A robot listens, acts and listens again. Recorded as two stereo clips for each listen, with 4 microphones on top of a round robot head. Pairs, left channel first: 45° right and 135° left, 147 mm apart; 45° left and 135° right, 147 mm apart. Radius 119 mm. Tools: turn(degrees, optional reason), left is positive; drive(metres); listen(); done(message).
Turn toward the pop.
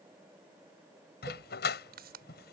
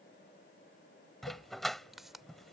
turn(degrees=135, reason="The pop: 135° left.")
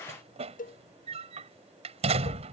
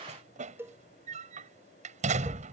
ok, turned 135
done("Facing where the pop came from. I can't hear it now.")